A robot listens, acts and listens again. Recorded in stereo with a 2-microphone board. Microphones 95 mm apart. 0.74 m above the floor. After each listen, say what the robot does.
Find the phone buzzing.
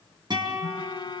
Turn 55° left.
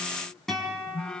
Turn 15° left.
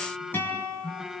Facing the phone buzzing, under 1 m away.